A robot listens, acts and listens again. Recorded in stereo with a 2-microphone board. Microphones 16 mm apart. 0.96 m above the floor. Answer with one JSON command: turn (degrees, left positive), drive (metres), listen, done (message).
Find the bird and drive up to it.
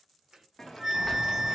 {"turn": -20}
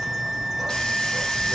{"drive": 1.0}
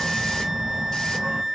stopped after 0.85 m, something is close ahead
{"turn": -15}
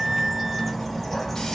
{"done": "I am next to the bird."}